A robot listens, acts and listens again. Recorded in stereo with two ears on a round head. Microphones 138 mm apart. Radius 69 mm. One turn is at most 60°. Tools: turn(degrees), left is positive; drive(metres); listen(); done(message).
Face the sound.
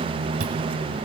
listen()
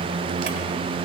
listen()
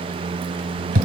turn(degrees=-50)
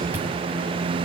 listen()
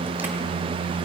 listen()
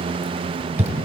turn(degrees=-15)
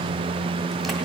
listen()
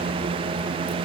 listen()
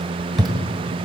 done("Found it: chewing, straight ahead.")